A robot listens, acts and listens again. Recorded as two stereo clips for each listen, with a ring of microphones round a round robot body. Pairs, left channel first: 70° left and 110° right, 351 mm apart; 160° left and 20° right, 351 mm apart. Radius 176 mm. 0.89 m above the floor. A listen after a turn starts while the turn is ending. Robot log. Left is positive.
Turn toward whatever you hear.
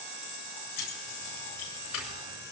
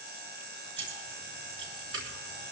note: The keys jangling: 35° left.
cmd yaw +35
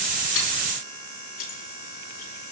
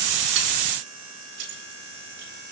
end: Facing the keys jangling, over 4 m away.